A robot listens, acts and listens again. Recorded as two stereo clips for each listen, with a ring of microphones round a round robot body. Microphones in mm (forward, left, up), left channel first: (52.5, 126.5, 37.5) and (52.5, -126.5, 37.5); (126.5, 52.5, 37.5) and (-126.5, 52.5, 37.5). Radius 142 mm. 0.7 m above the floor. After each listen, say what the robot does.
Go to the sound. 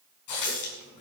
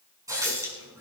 Turn 100° left.
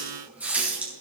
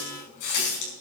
Drive 1.0 m forward.
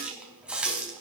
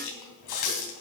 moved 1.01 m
Drive 1.0 m forward.
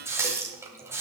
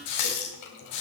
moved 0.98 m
Turn 10° right.
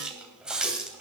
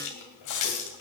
Drive 1.0 m forward.
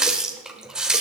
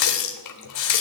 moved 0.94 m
Drive 1.0 m forward.
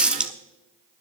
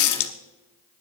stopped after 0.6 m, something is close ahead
I am next to the running tap.